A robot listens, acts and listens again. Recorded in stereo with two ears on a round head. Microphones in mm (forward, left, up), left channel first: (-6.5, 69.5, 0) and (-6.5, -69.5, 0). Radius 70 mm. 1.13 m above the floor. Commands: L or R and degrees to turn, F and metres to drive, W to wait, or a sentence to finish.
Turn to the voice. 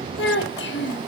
L90
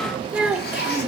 Facing the child speaking.